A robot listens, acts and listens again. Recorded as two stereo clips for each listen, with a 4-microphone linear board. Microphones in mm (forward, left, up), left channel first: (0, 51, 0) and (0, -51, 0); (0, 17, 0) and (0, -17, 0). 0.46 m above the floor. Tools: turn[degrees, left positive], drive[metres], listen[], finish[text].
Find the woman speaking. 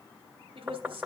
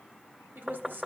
Thought: The woman speaking: about 60° right or 120° right.
Action: turn[-60]
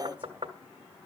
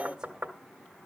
Action: listen[]
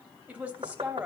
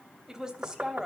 Thought: So it is at 15° right.
Action: turn[-15]
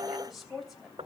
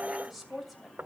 Action: finish[Facing the woman speaking, 2 to 4 m away.]